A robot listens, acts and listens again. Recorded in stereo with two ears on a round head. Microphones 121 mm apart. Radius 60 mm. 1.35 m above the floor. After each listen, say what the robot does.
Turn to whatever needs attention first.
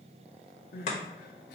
Turn 90° left.
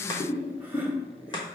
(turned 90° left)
Keep listening.
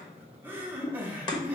Turn 15° right.
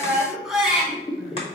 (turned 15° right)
Facing the crying.